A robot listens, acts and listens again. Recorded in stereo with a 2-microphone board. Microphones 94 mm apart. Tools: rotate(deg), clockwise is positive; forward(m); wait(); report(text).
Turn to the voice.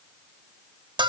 wait()
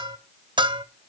wait()
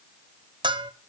report("I can't make out anyone speaking to turn to.")